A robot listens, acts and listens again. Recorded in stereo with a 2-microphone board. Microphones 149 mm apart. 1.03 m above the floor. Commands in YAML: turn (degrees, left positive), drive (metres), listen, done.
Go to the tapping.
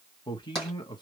turn: 30
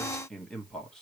turn: -30
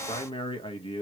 listen: true
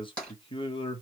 drive: 1.0
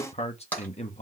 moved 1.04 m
turn: 10
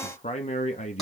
listen: true
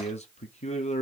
listen: true
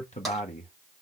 done: "I heard tapping from this way, but can't make it out now. I did not reach it."